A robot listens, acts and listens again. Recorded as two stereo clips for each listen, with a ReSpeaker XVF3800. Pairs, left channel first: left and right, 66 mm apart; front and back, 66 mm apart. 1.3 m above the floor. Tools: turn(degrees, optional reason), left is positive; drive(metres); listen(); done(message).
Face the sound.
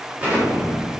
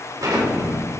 turn(degrees=-160, reason="The explosion: 160° right.")
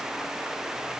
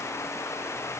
done("Facing where the explosion came from. I can't hear it now.")